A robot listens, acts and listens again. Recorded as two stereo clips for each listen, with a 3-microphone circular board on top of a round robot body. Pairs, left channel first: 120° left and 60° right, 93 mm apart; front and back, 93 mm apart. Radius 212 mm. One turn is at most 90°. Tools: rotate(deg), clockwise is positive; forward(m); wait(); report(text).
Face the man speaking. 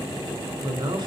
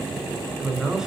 rotate(90)
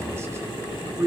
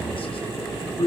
report("Facing the man speaking, 2 to 4 m away.")